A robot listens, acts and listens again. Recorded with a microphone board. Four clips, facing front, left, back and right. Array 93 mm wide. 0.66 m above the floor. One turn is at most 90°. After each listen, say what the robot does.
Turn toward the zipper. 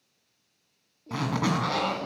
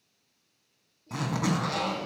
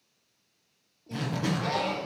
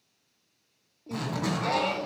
Turn 15° left.
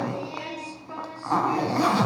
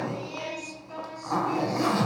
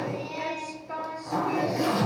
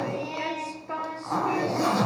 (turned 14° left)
Facing the zipper, 1 to 2 m away.